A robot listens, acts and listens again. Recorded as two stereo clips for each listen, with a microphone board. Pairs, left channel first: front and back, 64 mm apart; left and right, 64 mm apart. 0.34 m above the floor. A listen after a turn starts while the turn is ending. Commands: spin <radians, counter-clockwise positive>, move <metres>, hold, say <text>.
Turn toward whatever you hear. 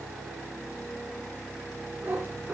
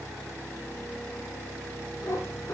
spin 2.09
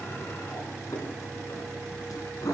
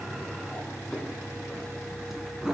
spin -0.17
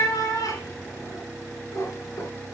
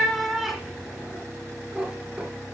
spin -0.26
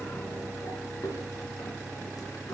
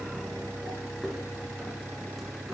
say Found it: a cat meowing, straight ahead.